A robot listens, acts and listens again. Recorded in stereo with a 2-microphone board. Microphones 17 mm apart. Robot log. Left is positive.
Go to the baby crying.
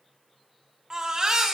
note: The baby crying: about 35° right or 145° right.
cmd yaw -35
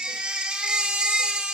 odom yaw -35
note: So it is at 105° right.
cmd yaw -105
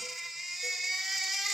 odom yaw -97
note: The baby crying is now 10° right.
cmd yaw -10
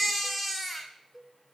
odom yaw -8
cmd fwd 1.0
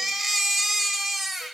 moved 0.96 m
note: The baby crying is now 10° right.
cmd yaw -10
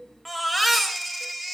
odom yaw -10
cmd fwd 1.0
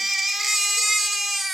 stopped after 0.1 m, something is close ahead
note: The baby crying is now 10° right.
cmd yaw -10
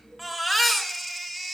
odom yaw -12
end: Arrived at the baby crying, straight ahead.